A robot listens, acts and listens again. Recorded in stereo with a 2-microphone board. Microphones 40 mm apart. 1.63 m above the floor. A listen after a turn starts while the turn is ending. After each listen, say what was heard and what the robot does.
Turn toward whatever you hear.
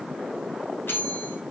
The bell: about 70° left or 110° left. Turn 70° left.
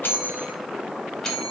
So it is at 10° left. Turn 10° left.
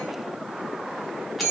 Found it: a bell, straight ahead.